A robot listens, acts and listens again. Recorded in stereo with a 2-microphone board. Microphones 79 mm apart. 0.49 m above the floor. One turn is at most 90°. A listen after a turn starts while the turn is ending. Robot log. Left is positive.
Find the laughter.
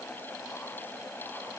cmd idle
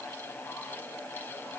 cmd idle
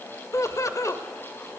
note: The laughter: about 40° left or 140° left.
cmd yaw +40
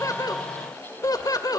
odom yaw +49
note: So it is at 80° left.
cmd yaw +80
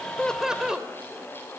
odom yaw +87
note: The laughter is now 10° right.
cmd yaw -10
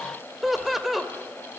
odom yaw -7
end: Found it: laughter, straight ahead.